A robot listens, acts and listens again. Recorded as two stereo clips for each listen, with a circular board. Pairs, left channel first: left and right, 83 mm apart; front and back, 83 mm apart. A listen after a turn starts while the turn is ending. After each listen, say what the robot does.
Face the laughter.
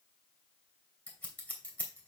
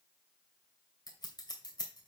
Keep listening.
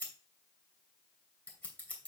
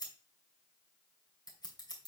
Keep listening.
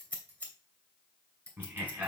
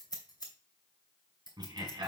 Turn 155° right.
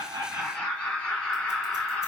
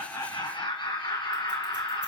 Turn 15° left.
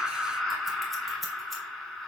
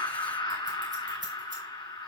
Facing the laughter, 2 to 4 m away.